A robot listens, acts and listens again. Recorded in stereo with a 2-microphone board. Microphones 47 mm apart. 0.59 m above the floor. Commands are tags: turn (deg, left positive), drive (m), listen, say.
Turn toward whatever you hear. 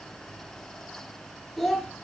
<turn deg="30"/>
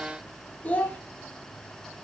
<turn deg="150"/>
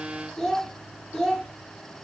<turn deg="15"/>
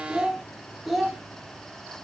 <say>Facing the child speaking.</say>